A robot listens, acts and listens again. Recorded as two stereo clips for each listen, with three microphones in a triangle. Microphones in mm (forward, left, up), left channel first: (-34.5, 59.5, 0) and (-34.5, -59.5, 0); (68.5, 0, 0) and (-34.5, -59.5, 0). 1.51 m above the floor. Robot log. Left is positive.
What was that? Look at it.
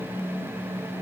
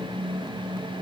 cmd idle
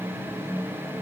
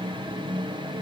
cmd idle
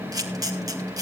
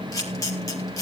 note: The camera shutter: 30° right.
cmd yaw -30
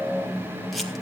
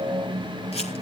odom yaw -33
cmd idle
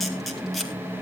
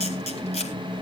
end: Facing the camera shutter, 2 to 4 m away.